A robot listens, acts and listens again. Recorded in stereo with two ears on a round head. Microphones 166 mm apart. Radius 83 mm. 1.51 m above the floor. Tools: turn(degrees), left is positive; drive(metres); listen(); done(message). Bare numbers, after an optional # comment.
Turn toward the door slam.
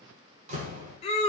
# The door slam: about 45° right or 135° right.
turn(-45)
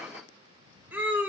listen()
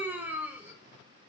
done("I heard a door slam, but can't make it out now. It was about straight ahead or 90° right.")